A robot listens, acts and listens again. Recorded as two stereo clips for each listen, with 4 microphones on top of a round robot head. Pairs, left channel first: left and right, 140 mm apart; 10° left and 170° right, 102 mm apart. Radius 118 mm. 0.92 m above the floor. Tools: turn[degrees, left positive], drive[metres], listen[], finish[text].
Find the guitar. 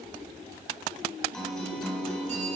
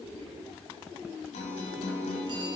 Thought: The guitar: 10° left.
Action: turn[10]
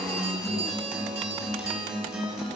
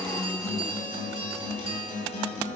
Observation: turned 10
Action: finish[Facing the guitar.]